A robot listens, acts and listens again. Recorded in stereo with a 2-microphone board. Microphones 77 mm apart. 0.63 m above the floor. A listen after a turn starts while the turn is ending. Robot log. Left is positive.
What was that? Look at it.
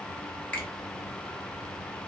note: The finger snap: about 15° left or 165° left.
cmd yaw +15
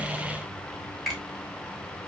end: Found it: a finger snap, straight ahead, 2 to 4 m away.